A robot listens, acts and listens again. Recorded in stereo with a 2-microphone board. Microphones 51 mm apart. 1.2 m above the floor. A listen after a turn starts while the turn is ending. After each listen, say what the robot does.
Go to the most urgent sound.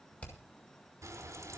Keep listening.
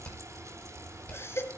Turn 55° left.
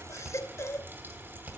Turn 65° left.
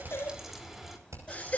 Turn 30° left.
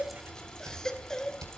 Turn 10° left.
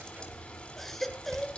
Drive 1.0 m forward.
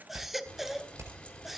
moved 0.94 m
Drive 1.0 m forward.
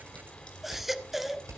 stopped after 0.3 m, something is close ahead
Arrived at the baby crying, straight ahead.